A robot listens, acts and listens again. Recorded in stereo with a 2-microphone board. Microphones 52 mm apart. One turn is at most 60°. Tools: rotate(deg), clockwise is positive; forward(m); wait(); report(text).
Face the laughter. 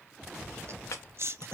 rotate(55)
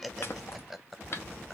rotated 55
report("Facing the laughter, under 1 m away.")